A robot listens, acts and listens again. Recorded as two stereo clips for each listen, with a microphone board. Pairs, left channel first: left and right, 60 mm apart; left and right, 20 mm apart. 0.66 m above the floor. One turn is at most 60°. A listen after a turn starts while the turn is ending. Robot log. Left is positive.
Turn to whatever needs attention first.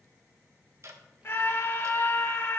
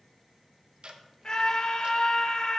note: The scream: about 40° left or 140° left.
cmd yaw +40
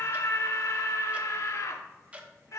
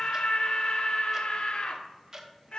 note: So it is at 90° left.
cmd yaw +60
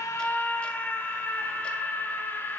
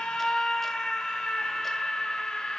note: The scream is now 40° left.
cmd yaw +40
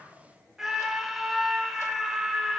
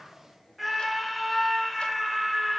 end: Found it: a scream, straight ahead, 1 to 2 m away.